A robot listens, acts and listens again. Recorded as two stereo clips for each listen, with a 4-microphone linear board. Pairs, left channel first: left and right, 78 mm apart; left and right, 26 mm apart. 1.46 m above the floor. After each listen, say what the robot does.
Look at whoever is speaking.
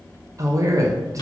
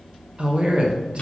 Turn 40° right.
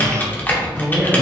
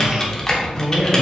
Facing the man speaking, under 1 m away.